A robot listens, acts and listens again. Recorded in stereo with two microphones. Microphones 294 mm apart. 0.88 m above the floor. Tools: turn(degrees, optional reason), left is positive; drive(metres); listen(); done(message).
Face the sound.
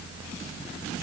listen()
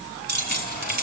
turn(degrees=-30, reason="The keys jangling: about 30° right or 150° right.")
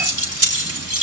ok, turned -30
turn(degrees=-130, reason="So it is at 130° right.")
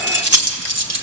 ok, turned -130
turn(degrees=-60, reason="The keys jangling is now 60° right.")
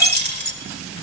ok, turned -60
turn(degrees=-35, reason="The keys jangling is now 35° right.")
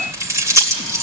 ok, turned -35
turn(degrees=-10, reason="The keys jangling is now 10° right.")
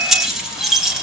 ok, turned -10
done("Found it: keys jangling, straight ahead, 2 to 4 m away.")